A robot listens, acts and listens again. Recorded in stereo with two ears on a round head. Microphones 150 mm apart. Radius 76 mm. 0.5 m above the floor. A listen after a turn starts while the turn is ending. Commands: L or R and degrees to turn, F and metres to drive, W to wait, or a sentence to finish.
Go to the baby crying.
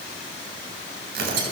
W
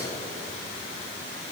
W
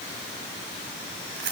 I can't make out a baby crying to turn to.